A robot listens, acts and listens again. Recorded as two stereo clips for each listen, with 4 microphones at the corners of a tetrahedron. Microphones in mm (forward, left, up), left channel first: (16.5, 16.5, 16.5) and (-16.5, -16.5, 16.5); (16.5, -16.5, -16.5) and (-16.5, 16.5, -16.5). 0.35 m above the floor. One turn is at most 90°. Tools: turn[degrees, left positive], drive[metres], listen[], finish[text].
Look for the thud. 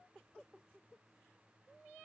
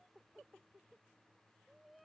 Action: listen[]
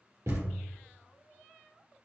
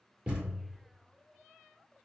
Thought: The thud: 155° right.
Action: turn[-90]
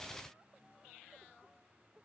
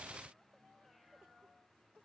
Thought: Nothing new. It was at 65° right.
Action: turn[-65]
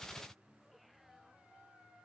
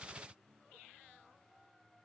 Action: finish[Facing where the thud came from. I can't hear it now.]